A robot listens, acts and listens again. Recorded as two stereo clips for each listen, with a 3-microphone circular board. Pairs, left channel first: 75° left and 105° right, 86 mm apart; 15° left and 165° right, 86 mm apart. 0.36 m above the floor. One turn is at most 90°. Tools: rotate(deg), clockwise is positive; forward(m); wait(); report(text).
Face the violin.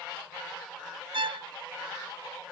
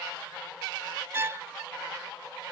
rotate(90)
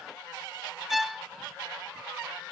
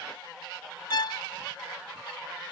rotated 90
rotate(15)
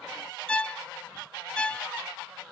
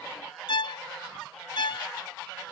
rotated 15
report("Facing the violin.")